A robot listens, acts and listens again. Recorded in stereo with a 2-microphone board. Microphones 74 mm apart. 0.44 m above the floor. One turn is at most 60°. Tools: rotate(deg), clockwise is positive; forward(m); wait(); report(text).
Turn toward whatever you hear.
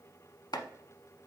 rotate(-60)
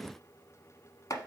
rotate(-50)
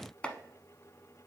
rotate(-15)
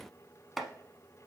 report("Facing the chopping, under 1 m away.")